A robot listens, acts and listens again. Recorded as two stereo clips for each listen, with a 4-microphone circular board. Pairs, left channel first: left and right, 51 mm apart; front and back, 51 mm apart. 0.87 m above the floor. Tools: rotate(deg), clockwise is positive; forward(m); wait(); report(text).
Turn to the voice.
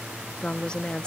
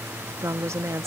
rotate(-160)
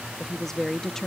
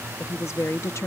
rotate(-10)
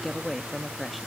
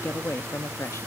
report("Facing the woman speaking.")